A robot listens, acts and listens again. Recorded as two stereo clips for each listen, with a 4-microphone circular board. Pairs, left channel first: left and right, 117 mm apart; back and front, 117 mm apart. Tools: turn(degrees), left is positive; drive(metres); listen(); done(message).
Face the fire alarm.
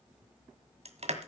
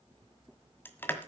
listen()
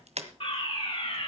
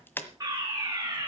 turn(degrees=60)
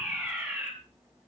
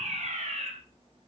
done("Found it: a fire alarm, straight ahead.")